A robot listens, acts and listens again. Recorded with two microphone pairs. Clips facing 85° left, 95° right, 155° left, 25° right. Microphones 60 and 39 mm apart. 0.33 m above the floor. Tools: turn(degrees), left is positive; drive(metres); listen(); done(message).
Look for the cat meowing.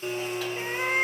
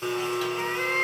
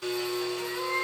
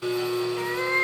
done("Facing the cat meowing, under 1 m away.")